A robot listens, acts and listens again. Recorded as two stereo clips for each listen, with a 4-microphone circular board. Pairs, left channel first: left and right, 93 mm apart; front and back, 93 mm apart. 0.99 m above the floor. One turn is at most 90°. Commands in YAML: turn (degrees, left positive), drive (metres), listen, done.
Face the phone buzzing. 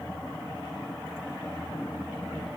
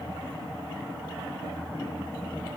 listen: true
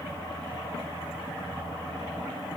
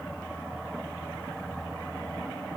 listen: true
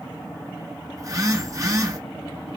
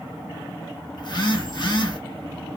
turn: -35
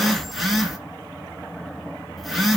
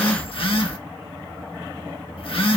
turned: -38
done: "Found it: a phone buzzing, straight ahead."